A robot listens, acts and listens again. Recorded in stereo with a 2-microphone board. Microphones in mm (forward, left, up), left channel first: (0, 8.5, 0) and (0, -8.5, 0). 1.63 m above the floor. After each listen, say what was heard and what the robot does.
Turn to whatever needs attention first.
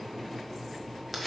Keep listening.
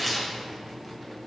Keep listening.
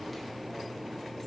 I can't make out anything urgent, only tearing paper.